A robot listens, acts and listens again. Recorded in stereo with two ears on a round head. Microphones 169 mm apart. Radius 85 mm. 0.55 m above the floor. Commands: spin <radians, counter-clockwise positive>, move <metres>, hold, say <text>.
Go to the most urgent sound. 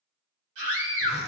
spin -1.31
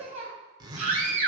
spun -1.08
spin -0.70
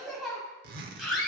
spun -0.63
move 1.0
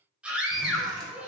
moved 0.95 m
move 1.0
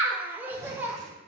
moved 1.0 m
spin -0.17
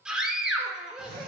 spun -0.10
move 1.0
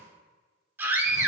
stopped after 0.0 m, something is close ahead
spin -0.26
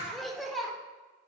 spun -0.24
say I am next to the scream.